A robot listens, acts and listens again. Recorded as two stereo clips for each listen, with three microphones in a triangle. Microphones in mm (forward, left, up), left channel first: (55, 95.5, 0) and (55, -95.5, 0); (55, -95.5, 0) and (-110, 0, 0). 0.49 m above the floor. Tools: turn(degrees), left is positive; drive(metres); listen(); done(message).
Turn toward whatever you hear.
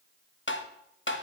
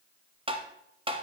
turn(degrees=90)
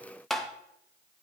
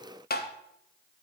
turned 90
done("Found it: tapping, straight ahead, under 1 m away.")